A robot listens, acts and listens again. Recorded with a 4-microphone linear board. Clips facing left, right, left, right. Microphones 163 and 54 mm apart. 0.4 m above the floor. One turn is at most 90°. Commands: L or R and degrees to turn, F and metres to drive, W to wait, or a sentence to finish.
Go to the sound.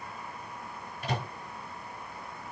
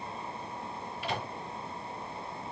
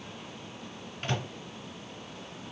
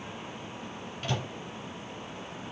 L40
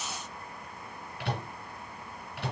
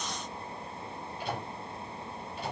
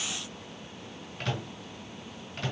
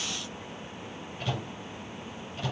L90
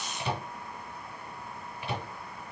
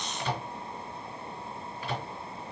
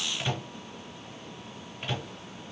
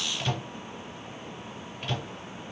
L20
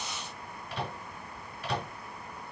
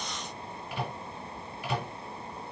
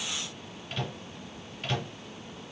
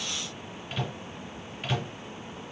F1.0
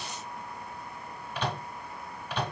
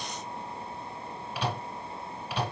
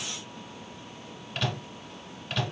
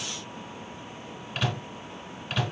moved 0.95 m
R10
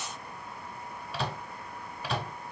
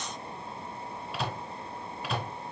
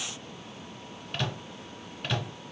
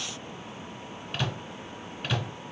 F1.0
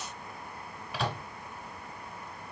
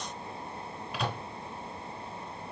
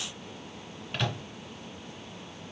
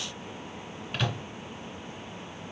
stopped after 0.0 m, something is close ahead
Arrived at the microwave, straight ahead.